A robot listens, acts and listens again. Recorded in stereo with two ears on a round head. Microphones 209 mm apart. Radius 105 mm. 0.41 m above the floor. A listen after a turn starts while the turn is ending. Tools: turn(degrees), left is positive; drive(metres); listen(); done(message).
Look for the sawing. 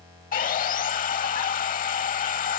turn(degrees=35)
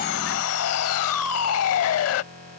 turn(degrees=110)
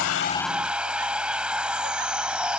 done("Facing the sawing.")